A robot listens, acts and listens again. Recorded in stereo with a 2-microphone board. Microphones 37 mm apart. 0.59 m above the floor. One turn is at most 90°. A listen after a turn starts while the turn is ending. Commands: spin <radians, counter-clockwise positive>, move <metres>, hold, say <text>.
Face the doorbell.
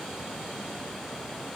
hold
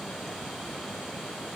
hold
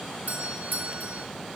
spin -0.87
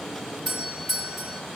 say Found it: a doorbell, straight ahead, over 4 m away.